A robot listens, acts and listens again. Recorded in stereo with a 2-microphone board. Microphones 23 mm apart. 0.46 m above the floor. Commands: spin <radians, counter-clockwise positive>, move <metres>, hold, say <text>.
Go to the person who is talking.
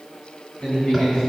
spin 0.87
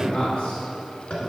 spin 1.31
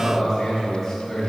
move 1.0
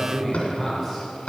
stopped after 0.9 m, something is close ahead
say I am next to the man speaking.